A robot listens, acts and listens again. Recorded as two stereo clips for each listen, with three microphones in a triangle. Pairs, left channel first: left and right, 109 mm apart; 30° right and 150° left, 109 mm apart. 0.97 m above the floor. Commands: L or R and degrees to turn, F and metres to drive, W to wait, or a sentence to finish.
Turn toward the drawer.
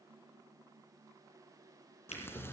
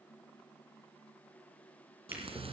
L80
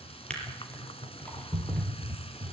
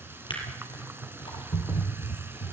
L10
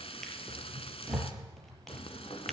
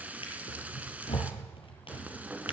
Facing the drawer, over 4 m away.